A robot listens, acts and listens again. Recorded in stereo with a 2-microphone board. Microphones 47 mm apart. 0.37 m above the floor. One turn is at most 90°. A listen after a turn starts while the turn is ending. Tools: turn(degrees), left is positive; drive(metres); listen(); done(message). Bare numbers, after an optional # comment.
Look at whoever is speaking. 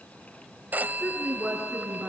turn(-30)
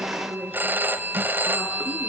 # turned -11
done("Facing the woman speaking.")